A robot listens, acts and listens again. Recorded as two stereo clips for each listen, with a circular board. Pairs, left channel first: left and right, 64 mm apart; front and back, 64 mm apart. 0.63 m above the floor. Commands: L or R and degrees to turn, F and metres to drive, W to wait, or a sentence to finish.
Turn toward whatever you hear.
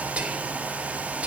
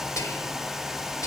R20
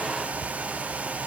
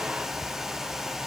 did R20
W
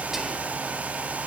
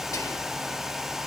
W
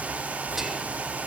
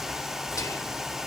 Found it: whispering, straight ahead.